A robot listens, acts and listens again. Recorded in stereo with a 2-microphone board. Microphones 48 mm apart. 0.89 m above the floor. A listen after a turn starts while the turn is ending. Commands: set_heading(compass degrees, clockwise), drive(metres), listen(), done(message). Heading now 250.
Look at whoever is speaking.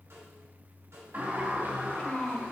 set_heading(225)
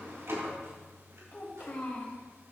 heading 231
set_heading(96)
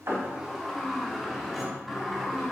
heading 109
set_heading(94)
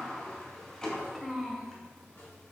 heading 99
done("Found it: a child speaking, straight ahead, 2 to 4 m away.")